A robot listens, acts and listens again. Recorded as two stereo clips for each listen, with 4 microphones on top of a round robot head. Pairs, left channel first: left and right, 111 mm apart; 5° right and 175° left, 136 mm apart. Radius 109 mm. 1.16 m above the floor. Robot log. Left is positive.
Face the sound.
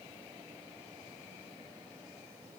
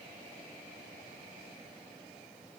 cmd idle
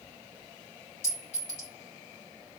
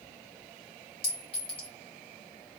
note: The clink: 50° left.
cmd yaw +50
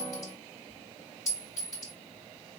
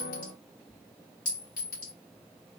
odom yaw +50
note: The clink is now 20° left.
cmd yaw +20
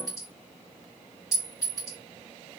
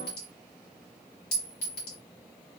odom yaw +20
end: Found it: a clink, straight ahead, 2 to 4 m away.